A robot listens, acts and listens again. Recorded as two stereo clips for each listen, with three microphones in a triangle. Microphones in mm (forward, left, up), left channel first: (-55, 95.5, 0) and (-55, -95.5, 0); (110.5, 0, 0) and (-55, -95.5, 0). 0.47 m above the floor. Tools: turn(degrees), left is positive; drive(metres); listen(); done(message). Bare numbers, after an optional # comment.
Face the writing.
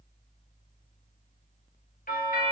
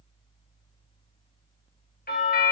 listen()
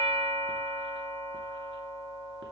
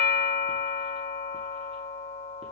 listen()
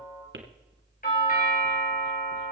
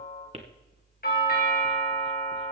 # The writing: 95° right.
turn(-95)
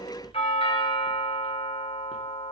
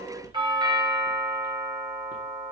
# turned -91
listen()
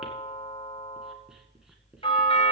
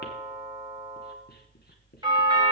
listen()
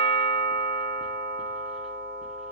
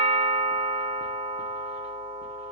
done("Facing where the writing came from. I can't hear it now.")